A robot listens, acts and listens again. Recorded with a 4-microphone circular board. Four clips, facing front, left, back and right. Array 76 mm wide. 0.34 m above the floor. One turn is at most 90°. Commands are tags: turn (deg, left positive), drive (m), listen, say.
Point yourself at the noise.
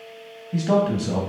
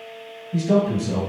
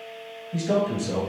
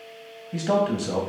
<turn deg="-55"/>
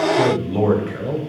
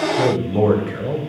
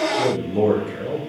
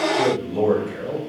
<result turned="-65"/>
<turn deg="60"/>
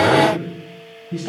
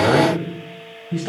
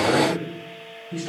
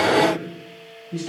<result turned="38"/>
<turn deg="70"/>
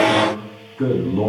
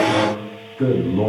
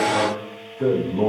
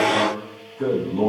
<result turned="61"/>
<turn deg="25"/>
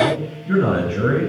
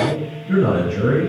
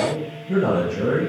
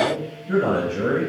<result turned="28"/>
<say>Found it: a man speaking, straight ahead.</say>